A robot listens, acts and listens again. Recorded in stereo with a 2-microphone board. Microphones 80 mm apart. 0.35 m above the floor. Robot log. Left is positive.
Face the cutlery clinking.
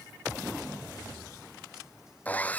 cmd idle
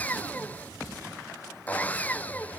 cmd idle
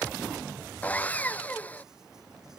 end: I can't make out cutlery clinking to turn to.